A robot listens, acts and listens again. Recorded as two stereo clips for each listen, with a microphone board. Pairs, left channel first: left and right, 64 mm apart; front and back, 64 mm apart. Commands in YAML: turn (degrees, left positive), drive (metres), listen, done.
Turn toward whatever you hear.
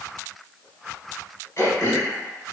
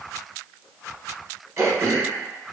turn: 135
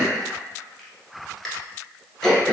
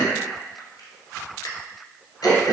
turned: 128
done: "Facing the throat clearing, under 1 m away."